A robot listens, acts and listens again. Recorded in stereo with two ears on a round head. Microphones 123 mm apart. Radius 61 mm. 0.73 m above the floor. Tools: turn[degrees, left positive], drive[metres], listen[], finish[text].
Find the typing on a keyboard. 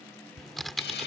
Action: turn[30]
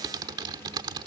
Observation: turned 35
Thought: So it is at 30° right.
Action: turn[-30]
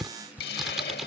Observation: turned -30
Action: finish[Found it: typing on a keyboard, straight ahead.]